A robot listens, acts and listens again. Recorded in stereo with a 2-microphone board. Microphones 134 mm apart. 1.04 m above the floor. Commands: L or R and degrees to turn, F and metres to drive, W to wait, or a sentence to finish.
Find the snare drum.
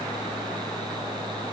W
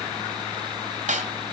R70
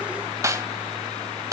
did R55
R25
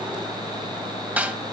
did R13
R15
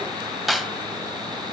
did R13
Facing the snare drum, 1 to 2 m away.